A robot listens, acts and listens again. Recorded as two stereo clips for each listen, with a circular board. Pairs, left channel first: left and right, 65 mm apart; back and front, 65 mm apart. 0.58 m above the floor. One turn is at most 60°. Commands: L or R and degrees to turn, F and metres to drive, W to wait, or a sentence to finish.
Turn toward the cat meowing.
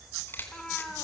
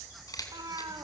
L10
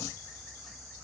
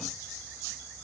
W
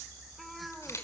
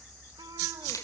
Facing the cat meowing, 2 to 4 m away.